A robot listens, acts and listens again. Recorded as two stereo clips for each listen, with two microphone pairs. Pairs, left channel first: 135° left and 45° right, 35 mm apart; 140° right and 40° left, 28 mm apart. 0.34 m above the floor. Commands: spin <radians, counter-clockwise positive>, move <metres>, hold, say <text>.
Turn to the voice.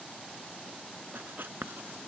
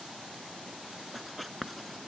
hold
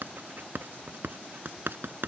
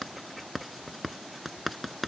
hold
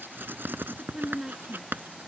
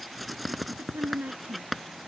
spin 0.35
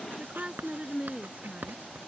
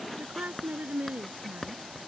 spin 0.17
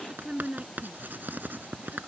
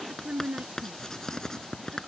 say Facing the woman speaking.